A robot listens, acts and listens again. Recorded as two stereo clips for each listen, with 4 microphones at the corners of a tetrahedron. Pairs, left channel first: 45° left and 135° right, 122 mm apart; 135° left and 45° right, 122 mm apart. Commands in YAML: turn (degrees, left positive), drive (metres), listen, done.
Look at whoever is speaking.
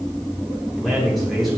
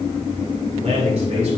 turn: -45
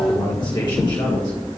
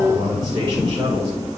done: "Facing the man speaking."